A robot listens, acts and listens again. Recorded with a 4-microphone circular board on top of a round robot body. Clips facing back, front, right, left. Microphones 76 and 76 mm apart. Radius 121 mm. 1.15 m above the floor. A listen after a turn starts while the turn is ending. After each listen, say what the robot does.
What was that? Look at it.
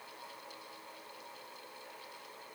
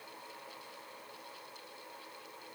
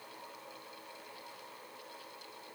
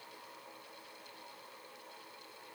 Keep listening.
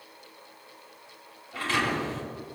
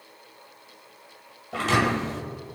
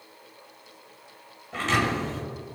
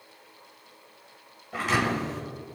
Turn 10° left.
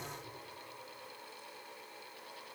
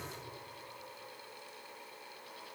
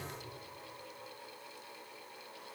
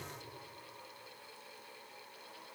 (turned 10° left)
Facing where the thud came from. I can't hear it now.